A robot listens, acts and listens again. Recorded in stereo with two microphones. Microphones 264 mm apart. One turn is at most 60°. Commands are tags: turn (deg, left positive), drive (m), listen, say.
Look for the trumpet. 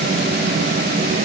<listen/>
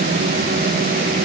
<listen/>
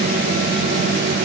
<say>I can't make out a trumpet to turn to.</say>